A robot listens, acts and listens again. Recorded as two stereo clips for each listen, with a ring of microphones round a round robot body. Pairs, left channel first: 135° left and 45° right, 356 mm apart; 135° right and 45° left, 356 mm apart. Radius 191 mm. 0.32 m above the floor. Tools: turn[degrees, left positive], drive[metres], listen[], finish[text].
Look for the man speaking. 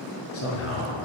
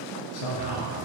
Thought: The man speaking: 170° right.
Action: turn[-170]
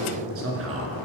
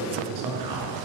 Thought: The man speaking is now 10° left.
Action: turn[10]
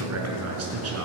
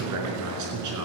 Action: finish[Facing the man speaking, over 4 m away.]